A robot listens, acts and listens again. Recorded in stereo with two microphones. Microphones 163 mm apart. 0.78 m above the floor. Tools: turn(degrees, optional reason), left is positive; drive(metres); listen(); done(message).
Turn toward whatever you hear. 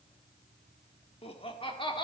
turn(degrees=30, reason="The laughter: about 30° left or 150° left.")
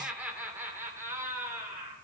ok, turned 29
turn(degrees=-20, reason="So it is at 20° right.")
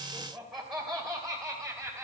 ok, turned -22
done("Facing the laughter.")